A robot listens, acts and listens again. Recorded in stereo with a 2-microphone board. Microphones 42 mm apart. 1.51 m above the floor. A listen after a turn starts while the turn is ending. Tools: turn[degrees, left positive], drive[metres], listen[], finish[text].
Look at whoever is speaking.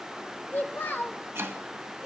Thought: The child speaking: about 50° left or 130° left.
Action: turn[50]
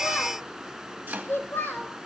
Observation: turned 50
Thought: So it is at 70° left.
Action: turn[70]
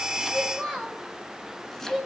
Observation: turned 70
Thought: The child speaking is now 10° left.
Action: turn[10]
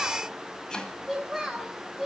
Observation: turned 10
Action: finish[Facing the child speaking, over 4 m away.]